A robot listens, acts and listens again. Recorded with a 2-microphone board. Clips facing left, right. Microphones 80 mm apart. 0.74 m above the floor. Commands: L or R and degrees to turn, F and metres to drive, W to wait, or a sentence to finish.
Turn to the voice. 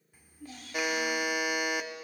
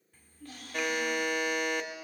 L30
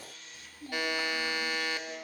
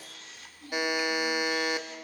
L140
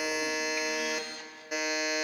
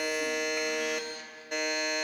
W
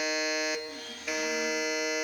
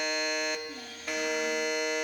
W
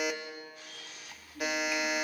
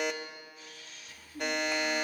R25
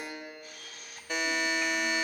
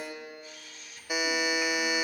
W
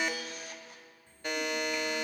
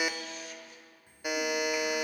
R10
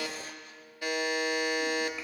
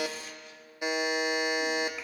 W
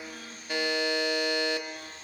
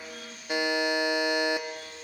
Found it: a child speaking, straight ahead, 1 to 2 m away.